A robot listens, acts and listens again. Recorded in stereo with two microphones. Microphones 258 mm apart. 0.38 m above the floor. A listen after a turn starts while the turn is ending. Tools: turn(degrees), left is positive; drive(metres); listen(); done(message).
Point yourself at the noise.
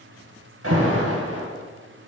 turn(degrees=-65)
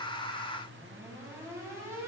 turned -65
turn(degrees=-10)
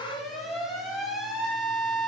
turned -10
done("Facing the alarm, 1 to 2 m away.")